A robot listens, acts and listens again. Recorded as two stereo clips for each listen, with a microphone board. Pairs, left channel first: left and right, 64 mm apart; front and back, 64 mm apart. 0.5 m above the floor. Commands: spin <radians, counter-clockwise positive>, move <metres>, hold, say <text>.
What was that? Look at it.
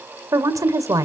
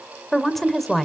spin -1.48
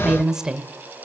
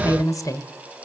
spin -0.17
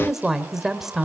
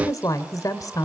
say Found it: a woman speaking, straight ahead.